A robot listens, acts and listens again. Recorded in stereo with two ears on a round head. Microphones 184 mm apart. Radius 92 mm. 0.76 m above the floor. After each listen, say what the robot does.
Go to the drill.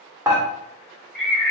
Keep listening.
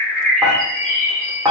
Keep listening.
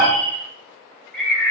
I can't make out a drill, only a bird and dishes clattering.